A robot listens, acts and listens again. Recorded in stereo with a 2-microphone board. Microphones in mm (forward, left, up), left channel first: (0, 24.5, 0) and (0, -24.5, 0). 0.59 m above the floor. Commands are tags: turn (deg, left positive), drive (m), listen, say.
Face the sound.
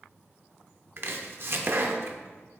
<turn deg="-55"/>
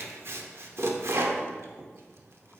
<turn deg="-70"/>
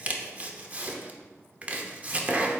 <turn deg="-35"/>
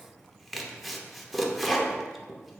<say>Facing the chopping.</say>